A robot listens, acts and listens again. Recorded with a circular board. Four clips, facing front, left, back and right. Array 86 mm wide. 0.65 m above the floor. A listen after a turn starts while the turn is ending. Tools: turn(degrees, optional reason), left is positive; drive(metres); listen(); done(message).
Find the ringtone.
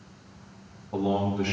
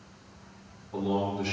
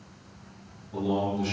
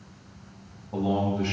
listen()
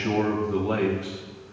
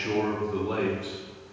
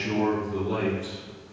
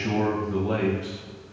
listen()
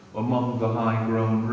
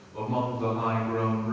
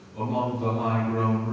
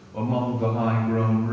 done("I can't make out a ringtone to turn to.")